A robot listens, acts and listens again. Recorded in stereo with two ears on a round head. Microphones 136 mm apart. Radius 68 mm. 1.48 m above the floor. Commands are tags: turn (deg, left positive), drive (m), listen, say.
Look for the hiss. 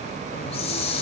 <turn deg="40"/>
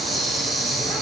<say>Found it: a hiss, straight ahead.</say>